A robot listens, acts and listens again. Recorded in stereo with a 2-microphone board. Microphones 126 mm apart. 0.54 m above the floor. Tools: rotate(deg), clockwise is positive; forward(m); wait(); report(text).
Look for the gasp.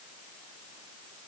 wait()
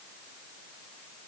wait()
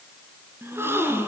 rotate(20)
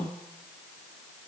rotate(145)
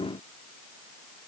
report("Facing where the gasp came from. I can't hear it now.")